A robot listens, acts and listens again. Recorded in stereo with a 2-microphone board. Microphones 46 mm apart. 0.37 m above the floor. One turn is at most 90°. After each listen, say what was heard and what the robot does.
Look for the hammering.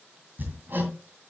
The hammering: about 45° right or 135° right. Turn 45° right.
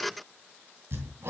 So it is at 85° right. Turn 85° right.
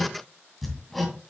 Found it: hammering, straight ahead, 2 to 4 m away.